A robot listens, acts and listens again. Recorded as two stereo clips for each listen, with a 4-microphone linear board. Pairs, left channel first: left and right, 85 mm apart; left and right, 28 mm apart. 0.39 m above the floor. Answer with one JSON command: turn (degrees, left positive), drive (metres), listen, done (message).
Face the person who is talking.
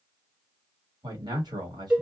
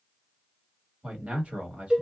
{"turn": -50}
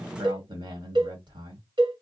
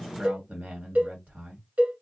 {"turn": -75}
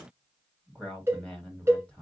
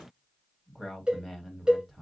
{"turn": 15}
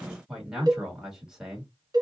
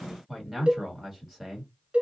{"done": "Facing the man speaking, 1 to 2 m away."}